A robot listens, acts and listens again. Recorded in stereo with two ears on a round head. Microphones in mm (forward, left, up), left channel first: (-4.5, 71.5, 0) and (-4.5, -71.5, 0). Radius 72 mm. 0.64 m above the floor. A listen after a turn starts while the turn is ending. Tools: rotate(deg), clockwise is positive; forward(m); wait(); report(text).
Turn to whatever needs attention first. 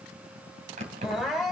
rotate(-30)
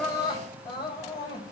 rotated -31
rotate(-150)
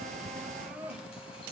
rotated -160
rotate(10)
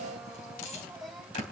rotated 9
wait()
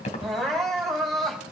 report("Facing the crying.")